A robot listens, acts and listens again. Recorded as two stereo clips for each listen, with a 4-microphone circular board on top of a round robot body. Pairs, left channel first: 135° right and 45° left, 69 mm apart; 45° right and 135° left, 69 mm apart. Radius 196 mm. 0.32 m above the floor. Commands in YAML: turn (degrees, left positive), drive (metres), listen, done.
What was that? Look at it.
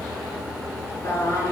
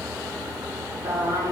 turn: 175
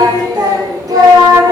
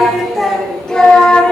turn: 20
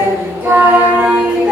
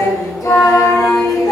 turn: -30
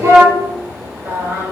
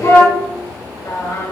turn: -15
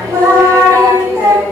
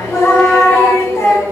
done: "Found it: singing, straight ahead."